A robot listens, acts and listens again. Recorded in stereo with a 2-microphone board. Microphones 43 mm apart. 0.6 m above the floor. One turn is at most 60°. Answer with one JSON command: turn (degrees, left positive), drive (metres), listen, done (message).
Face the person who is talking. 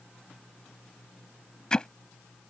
{"listen": true}
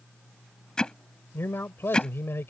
{"turn": 60}
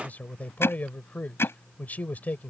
{"turn": 45}
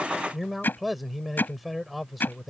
{"done": "Found it: a man speaking, straight ahead."}